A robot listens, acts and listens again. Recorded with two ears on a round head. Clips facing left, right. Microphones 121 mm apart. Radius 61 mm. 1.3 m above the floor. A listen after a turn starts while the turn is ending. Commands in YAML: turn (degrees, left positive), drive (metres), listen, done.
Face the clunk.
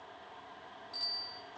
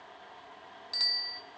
listen: true
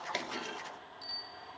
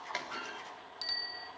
turn: 30
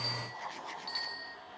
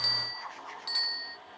listen: true
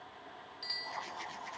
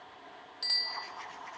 done: "I heard a clunk, but can't make it out now. It was about straight ahead or 120° left."